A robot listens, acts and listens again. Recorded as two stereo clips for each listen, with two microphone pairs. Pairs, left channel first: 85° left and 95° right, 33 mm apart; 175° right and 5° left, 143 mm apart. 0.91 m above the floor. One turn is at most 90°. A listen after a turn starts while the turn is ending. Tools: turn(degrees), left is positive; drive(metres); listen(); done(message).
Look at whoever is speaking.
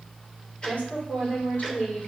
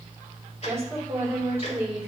turn(degrees=75)
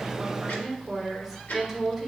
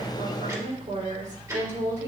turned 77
done("Found it: a woman speaking, straight ahead.")